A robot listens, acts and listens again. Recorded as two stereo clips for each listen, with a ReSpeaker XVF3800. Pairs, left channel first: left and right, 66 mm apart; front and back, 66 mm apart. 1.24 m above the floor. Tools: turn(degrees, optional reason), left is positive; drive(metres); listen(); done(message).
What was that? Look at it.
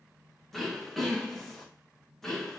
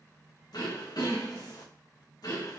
done("Facing the throat clearing, 1 to 2 m away.")